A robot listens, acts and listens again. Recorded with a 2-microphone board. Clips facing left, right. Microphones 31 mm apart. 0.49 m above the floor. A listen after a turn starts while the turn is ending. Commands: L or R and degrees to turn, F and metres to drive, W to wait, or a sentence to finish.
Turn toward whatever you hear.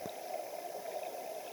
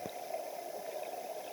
W
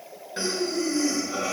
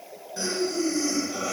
L35
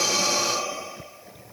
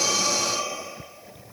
L110
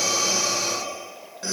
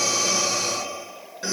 R10
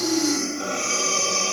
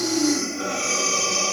Found it: breathing, straight ahead, over 4 m away.